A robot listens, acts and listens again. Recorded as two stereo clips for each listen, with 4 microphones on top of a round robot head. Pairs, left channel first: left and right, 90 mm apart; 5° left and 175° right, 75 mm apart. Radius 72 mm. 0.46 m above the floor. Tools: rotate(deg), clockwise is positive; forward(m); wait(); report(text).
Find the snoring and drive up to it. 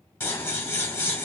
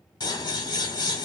wait()
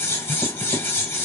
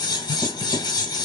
wait()
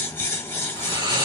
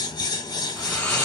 rotate(65)
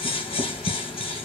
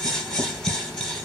forward(1.0)
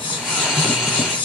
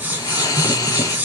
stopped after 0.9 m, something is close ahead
report("I am next to the snoring.")